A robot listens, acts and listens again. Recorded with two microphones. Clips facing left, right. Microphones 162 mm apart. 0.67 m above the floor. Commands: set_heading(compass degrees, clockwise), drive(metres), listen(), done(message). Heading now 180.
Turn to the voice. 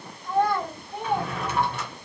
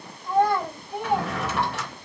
set_heading(210)
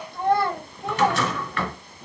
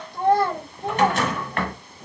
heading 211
set_heading(356)
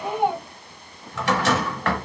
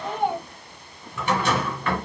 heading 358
done("Found it: a child speaking, straight ahead.")